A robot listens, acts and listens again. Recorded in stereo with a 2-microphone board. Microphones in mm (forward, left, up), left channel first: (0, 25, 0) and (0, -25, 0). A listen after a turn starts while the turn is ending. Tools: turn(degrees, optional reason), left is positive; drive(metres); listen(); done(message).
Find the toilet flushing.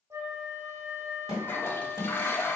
turn(degrees=50, reason="The toilet flushing: about 50° left or 130° left.")
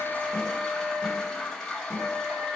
turn(degrees=10, reason="So it is at 10° left.")
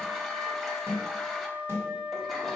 listen()
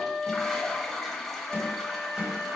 done("Found it: a toilet flushing, straight ahead, under 1 m away.")